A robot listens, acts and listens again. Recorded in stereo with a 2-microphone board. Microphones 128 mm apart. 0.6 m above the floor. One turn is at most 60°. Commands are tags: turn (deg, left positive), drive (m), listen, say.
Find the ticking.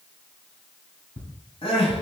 <turn deg="60"/>
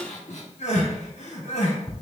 <say>Found it: ticking, straight ahead.</say>